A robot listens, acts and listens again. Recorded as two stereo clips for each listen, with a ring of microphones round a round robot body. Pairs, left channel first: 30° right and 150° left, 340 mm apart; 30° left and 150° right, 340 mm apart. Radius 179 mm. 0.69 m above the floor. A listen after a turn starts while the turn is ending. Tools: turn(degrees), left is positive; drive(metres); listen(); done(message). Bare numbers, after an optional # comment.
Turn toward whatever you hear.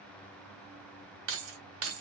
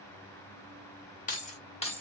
# The keys jangling: 105° left.
turn(105)
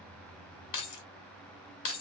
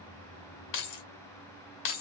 # The keys jangling is now 20° left.
turn(20)
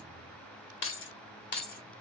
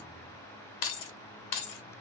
# The keys jangling is now 30° left.
turn(30)
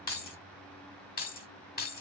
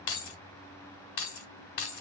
# The keys jangling is now 35° left.
turn(35)
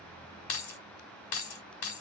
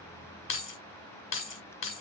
# The keys jangling is now 25° right.
turn(-25)
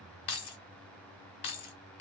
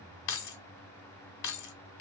done("Found it: keys jangling, straight ahead.")